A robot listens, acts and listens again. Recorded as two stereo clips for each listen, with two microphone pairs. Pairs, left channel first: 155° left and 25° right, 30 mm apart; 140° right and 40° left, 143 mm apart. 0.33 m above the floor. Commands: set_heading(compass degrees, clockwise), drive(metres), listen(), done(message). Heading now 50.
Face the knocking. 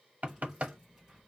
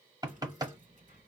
set_heading(70)
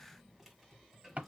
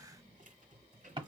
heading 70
set_heading(80)
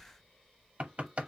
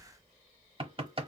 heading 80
done("Facing the knocking.")